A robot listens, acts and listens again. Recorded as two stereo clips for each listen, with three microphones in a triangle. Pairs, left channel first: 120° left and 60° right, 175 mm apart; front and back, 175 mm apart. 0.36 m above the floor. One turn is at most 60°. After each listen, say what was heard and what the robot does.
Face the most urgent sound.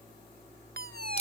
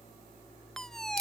The fire alarm: 90° right. Turn 60° right.
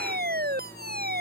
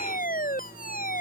The fire alarm is now 35° right. Turn 35° right.
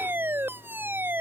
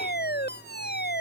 The fire alarm is now 20° left. Turn 20° left.
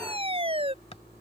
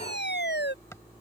Facing the fire alarm.